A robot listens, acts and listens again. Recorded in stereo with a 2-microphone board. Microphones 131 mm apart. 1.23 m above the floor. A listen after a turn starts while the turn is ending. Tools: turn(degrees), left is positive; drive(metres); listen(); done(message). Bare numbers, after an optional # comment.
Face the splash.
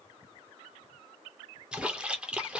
turn(-30)
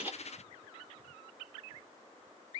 listen()
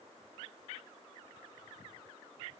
done("I heard a splash, but can't make it out now. It was about 25° left or 145° right.")